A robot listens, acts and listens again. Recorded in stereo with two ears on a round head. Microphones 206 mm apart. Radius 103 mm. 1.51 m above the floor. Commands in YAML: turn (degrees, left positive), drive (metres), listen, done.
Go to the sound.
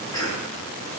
turn: 15
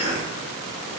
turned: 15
turn: 150
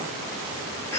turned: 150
turn: 10
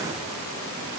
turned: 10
listen: true
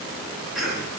drive: 1.0
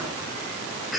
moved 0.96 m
drive: 1.0
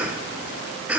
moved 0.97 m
drive: 1.0
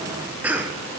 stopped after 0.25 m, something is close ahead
done: "Arrived at the cough, straight ahead."